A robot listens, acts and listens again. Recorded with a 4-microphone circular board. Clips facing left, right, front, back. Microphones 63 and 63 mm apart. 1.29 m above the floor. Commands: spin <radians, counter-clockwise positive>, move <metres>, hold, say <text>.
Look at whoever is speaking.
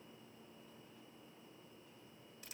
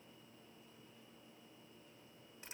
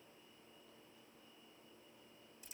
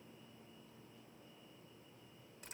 hold
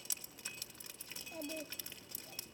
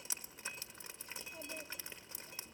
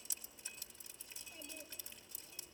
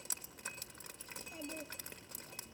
spin 1.92
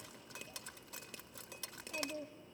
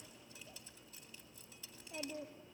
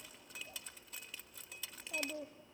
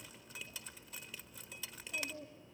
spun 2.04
say Found it: a child speaking, straight ahead.